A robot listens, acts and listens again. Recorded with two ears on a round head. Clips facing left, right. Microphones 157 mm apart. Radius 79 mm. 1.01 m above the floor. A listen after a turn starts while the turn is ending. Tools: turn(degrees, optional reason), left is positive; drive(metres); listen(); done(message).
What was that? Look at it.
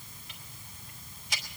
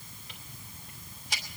turn(degrees=-30, reason="The ticking: about 30° right or 150° right.")
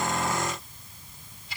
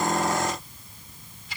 turn(degrees=-120, reason="So it is at 120° right.")
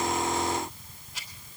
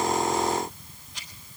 done("Facing the ticking, 2 to 4 m away.")